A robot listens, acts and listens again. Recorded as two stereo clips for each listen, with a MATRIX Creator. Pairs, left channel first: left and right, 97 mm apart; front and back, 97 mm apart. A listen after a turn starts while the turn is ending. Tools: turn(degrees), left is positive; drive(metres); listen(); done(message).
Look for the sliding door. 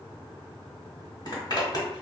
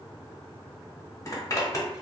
listen()
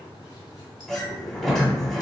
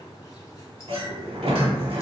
turn(degrees=175)
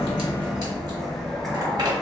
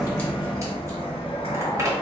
done("Found it: a sliding door, straight ahead, under 1 m away.")